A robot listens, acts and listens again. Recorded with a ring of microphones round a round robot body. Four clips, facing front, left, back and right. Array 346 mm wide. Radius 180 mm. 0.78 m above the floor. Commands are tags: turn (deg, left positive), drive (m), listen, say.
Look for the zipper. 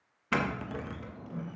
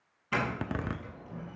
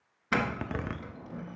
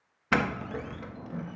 <turn deg="125"/>
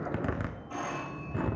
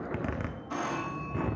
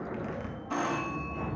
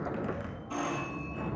<turn deg="35"/>
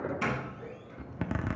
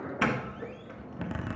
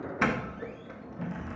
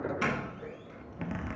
<turn deg="10"/>
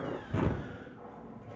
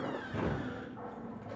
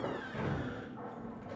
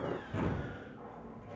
<say>Facing the zipper.</say>